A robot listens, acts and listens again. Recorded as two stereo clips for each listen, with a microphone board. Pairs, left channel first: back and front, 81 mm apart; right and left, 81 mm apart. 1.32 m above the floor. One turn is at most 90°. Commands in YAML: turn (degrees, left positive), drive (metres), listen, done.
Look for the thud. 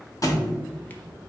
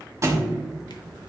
turn: 90
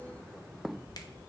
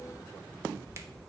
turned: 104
turn: 35
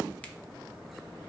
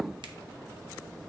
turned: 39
done: "I heard a thud from this way, but can't make it out now."